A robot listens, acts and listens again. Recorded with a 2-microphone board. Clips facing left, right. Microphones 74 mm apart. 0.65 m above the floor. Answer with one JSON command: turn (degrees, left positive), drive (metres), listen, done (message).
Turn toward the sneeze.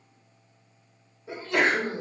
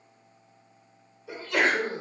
{"turn": 30}
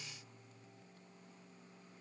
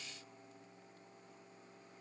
{"listen": true}
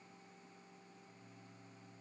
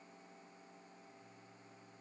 {"done": "I heard a sneeze, but can't make it out now. It was about straight ahead or 120° left."}